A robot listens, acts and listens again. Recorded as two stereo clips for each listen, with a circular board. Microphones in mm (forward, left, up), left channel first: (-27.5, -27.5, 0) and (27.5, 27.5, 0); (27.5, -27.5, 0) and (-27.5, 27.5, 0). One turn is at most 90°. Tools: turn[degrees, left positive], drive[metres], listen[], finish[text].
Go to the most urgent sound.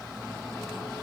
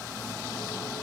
Action: listen[]
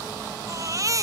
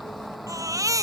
Thought: The baby crying: 90° left.
Action: turn[90]
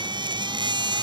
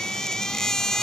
Thought: The baby crying is now 40° left.
Action: turn[40]
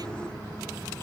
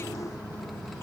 Action: listen[]
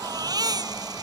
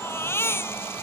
Thought: The baby crying is now 15° left.
Action: turn[15]
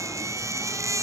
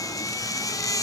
Action: drive[1.0]
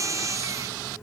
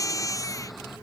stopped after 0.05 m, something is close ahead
Action: finish[Blocked. The baby crying is further on, straight ahead.]